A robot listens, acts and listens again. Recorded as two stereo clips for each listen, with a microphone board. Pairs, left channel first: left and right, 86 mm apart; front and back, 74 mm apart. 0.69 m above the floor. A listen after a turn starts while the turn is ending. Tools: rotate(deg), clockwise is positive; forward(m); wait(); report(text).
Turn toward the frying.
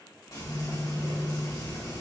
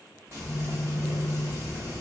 rotate(-130)
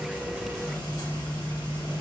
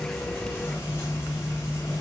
rotate(-55)
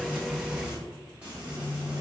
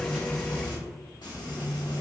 rotate(15)
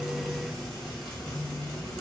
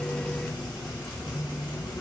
report("Found it: frying, straight ahead, 1 to 2 m away.")